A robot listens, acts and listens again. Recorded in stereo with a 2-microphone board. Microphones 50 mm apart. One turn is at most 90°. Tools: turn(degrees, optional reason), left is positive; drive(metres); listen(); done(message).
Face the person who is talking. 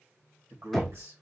turn(degrees=-70, reason="The man speaking: about 70° right or 110° right.")
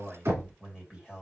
turn(degrees=-15, reason="So it is at 15° right.")
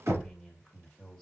turn(degrees=10, reason="The man speaking is now 10° left.")
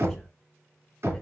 listen()
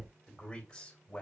turn(degrees=15, reason="The man speaking is now 15° left.")
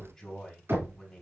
done("Found it: a man speaking, straight ahead, 2 to 4 m away.")